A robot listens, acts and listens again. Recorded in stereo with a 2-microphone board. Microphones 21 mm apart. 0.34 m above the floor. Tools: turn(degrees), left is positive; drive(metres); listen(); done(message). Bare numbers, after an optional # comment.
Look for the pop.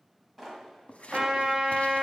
turn(30)
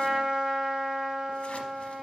listen()
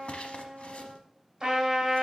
done("I heard a pop, but can't make it out now. It was about 30° right or 150° left.")